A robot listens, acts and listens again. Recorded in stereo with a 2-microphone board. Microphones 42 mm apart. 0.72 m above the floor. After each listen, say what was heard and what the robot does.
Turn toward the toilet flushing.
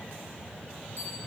Keep listening.
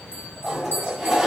Turn 30° right.
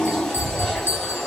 So it is at 15° left. Turn 15° left.
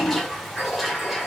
Facing the toilet flushing.